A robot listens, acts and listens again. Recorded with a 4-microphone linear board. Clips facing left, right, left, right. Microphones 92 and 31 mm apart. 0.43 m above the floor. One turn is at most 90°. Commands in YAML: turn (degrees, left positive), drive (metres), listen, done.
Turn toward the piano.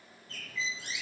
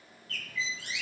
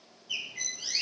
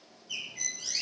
listen: true
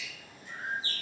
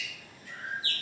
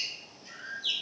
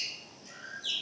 listen: true
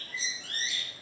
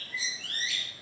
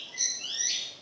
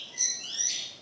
done: "I can't make out a piano, only a bird."